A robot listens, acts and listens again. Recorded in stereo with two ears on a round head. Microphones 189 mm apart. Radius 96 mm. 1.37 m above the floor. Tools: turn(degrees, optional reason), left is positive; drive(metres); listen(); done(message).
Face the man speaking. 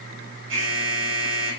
listen()
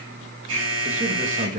turn(degrees=-40, reason="The man speaking: about 40° right or 140° right.")
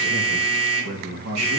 turn(degrees=-95, reason="So it is at 95° right.")
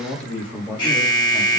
done("Found it: a man speaking, straight ahead.")